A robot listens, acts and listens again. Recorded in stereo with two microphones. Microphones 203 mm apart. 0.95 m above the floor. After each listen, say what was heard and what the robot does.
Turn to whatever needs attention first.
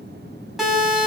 Turn 30° left.
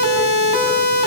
So it is at 30° right. Turn 30° right.
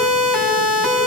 Found it: a siren, straight ahead.